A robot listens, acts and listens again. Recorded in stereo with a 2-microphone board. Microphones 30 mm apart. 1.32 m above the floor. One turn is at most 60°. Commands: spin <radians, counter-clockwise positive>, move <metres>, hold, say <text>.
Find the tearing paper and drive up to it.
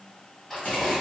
spin 0.52
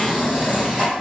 spin -0.52
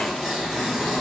move 1.0
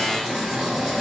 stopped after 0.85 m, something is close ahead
say Arrived at the tearing paper, straight ahead.